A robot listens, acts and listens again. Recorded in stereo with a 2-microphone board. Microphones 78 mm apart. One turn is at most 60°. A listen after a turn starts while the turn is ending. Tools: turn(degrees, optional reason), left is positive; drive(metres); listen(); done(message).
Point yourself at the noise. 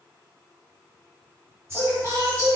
turn(degrees=-30, reason="The singing: about 30° right or 150° right.")
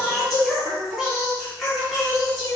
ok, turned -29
done("Facing the singing.")